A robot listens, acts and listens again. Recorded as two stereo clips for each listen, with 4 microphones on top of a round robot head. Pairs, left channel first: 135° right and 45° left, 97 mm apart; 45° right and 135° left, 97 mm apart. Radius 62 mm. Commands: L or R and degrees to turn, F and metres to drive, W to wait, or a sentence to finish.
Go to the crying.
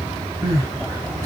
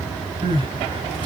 L100
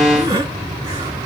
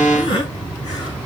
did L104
F1.0
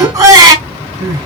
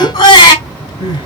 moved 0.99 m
F1.0
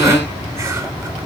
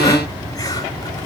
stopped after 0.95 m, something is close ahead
W
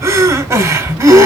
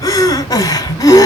I am next to the crying.